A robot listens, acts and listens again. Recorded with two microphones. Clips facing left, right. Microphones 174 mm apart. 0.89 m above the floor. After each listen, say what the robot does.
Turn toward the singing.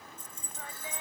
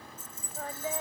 Turn 45° right.
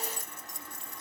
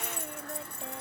Keep listening.
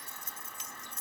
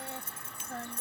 Turn 85° right.
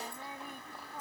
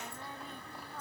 Keep listening.
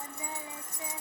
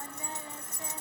Keep listening.
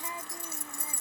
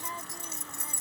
I heard singing from this way, but can't make it out now.